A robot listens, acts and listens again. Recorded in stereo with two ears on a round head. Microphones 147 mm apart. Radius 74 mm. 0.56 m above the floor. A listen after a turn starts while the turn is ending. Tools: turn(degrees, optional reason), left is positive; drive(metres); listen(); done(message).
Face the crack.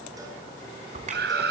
turn(degrees=-45, reason="The crack: about 45° right or 135° right.")
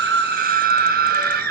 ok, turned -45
listen()
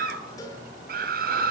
done("I heard a crack, but can't make it out now. It was about straight ahead or 90° right.")